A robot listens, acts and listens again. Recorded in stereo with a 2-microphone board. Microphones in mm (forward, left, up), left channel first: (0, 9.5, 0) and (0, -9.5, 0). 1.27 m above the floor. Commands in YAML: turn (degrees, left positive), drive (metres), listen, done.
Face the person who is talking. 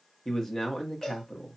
turn: 25
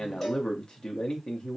turn: 130
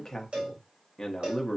turn: 25
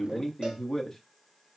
turn: 15
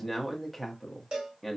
done: "Facing the man speaking."